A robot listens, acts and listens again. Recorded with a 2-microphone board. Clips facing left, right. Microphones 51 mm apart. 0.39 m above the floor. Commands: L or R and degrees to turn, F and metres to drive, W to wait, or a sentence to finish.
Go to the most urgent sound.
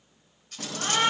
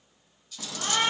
R30
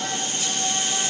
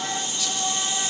R150
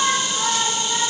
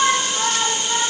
R10
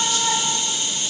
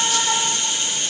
F1.0
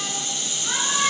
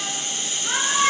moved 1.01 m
F1.0
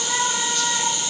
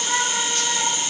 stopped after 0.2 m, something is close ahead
Arrived at the shout, straight ahead.